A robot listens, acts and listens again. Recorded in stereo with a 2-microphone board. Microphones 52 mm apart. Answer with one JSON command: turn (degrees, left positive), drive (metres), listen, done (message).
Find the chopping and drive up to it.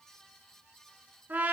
{"listen": true}
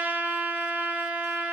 {"listen": true}
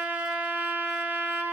{"done": "I can't make out chopping, only a trumpet."}